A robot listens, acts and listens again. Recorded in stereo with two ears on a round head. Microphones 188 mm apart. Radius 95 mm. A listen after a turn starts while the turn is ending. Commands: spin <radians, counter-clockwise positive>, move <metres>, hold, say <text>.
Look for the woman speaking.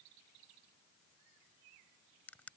hold
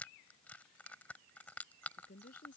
spin 0.70
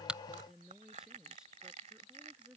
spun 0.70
say Facing the woman speaking.